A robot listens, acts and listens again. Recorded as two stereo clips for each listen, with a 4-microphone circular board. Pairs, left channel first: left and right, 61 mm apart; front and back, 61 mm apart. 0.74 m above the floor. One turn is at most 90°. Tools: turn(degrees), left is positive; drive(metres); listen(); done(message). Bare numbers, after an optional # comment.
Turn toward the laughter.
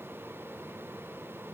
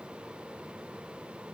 listen()
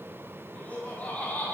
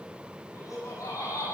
# The laughter: 25° left.
turn(25)
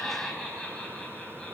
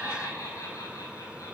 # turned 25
# The laughter is now 20° left.
turn(20)
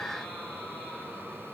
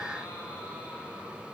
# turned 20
listen()
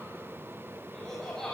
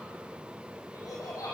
# The laughter is now 10° left.
turn(10)
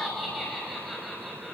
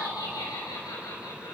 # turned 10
done("Found it: laughter, straight ahead.")